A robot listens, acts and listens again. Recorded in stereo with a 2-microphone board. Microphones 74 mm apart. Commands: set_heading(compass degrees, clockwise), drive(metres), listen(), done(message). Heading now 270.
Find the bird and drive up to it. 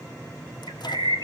set_heading(0)
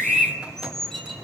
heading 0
drive(1.0)
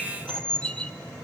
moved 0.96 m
set_heading(345)
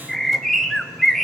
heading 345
drive(1.0)
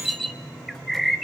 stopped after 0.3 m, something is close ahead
done("I am next to the bird.")